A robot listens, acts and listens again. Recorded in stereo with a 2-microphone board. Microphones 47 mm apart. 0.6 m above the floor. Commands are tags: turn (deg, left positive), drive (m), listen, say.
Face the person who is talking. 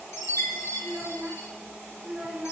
<turn deg="-30"/>
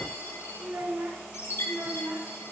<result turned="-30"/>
<turn deg="-115"/>
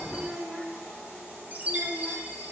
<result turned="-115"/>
<turn deg="-10"/>
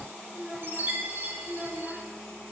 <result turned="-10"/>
<say>Found it: a child speaking, straight ahead, 1 to 2 m away.</say>